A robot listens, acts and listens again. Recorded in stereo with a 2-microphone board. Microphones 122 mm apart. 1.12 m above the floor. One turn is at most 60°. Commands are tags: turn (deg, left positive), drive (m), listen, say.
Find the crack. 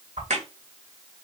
<turn deg="-60"/>
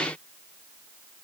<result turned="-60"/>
<listen/>
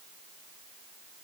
<say>I heard a crack, but can't make it out now. It was about 15° right or 45° right.</say>